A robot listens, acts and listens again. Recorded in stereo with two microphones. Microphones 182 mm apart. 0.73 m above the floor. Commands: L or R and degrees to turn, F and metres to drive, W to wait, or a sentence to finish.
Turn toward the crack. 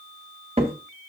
R30
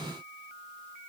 W
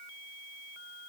I heard a crack, but can't make it out now. It was about straight ahead or 120° right.